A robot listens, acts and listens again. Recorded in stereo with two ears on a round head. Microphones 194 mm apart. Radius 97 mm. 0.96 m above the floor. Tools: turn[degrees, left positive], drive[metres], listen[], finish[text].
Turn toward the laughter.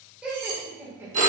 Action: turn[-30]
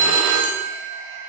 Action: listen[]
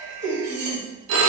Thought: So it is at 120° right.
Action: turn[-120]
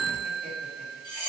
Action: listen[]
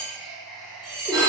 Action: finish[Facing the laughter.]